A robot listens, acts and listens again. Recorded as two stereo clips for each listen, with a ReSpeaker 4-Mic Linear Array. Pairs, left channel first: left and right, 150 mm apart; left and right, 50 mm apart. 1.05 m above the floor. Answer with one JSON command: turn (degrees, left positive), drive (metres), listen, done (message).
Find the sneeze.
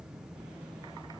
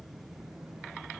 {"listen": true}
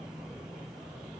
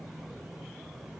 {"listen": true}
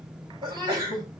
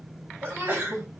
{"turn": -30}
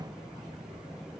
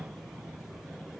{"listen": true}
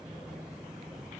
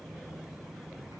{"done": "I heard a sneeze, but can't make it out now. It was about straight ahead or 120° right."}